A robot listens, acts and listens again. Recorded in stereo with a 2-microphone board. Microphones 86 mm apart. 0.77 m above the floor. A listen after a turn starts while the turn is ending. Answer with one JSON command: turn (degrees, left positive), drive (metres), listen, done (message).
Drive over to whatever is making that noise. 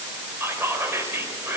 {"turn": -30}
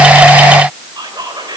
{"turn": -120}
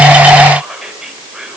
{"drive": 1.0}
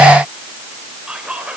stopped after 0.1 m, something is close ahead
{"turn": -10}
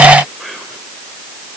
{"done": "Something is in my way. I am facing the whispering but have not reached it."}